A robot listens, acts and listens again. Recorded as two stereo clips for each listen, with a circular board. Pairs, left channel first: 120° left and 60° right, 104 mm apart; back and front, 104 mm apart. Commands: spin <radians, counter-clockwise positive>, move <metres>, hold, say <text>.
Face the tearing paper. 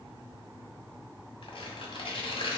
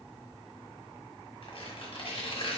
spin 2.62
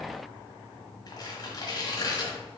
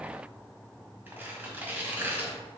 spin 1.22
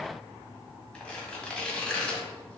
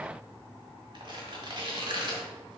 spin 0.70
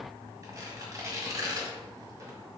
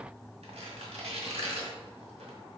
say Facing the tearing paper, 1 to 2 m away.